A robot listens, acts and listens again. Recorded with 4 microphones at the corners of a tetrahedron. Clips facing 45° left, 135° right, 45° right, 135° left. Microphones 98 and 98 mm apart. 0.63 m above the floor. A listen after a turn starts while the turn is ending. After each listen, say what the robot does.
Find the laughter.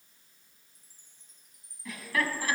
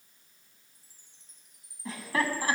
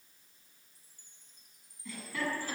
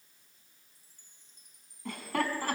Turn 160° left.
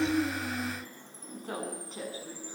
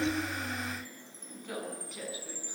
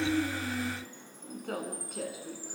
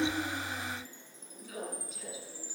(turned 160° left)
Turn 15° right.
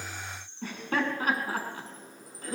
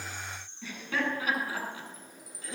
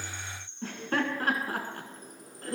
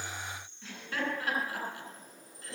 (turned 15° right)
Found it: laughter, straight ahead.